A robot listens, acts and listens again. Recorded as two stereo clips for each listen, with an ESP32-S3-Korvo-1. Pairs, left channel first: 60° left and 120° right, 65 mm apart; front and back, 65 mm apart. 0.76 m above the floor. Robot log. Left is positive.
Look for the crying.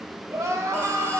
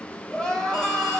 note: The crying: 80° right.
cmd yaw -80
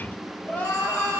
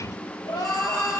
end: Found it: crying, straight ahead, 2 to 4 m away.